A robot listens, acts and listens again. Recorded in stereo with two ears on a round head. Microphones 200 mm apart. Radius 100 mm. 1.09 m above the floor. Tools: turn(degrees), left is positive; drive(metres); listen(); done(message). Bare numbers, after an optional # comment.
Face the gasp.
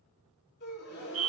# The gasp: about 50° left or 130° left.
turn(50)
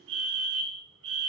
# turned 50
listen()
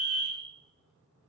done("I heard a gasp, but can't make it out now. It was about straight ahead or 80° left.")